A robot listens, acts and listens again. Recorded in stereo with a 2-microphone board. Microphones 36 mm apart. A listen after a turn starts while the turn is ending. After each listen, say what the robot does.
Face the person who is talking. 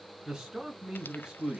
Turn 20° right.
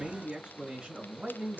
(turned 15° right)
Turn 145° right.
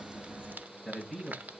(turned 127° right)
Turn 20° right.
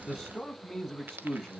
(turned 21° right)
Found it: a man speaking, straight ahead.